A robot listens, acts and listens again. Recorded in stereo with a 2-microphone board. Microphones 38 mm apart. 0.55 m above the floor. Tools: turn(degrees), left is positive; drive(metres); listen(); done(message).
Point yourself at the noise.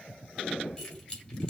turn(degrees=15)
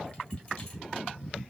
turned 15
listen()
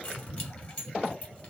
turn(degrees=150)
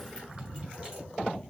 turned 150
listen()
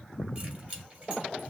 turn(degrees=-30)
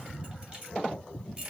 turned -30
turn(degrees=-30)
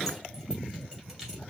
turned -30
listen()
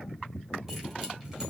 listen()
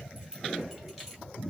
turn(degrees=-10)
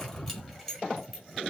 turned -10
done("Found it: keys jangling, straight ahead.")